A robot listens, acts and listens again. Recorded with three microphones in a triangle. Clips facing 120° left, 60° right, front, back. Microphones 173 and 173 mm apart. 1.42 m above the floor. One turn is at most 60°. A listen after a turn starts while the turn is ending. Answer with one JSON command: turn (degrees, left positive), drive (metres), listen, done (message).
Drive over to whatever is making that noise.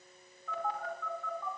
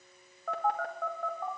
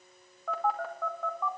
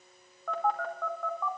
{"turn": -60}
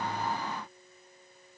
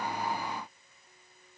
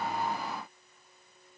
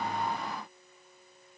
{"turn": -25}
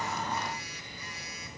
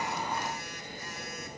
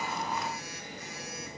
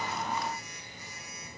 {"turn": -20}
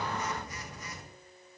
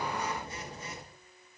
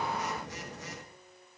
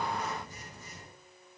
{"drive": 1.0}
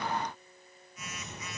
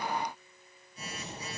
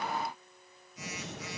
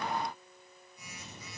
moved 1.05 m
{"drive": 1.0}
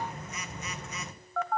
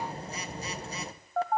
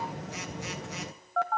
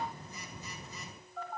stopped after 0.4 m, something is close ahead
{"done": "I am next to the phone buzzing."}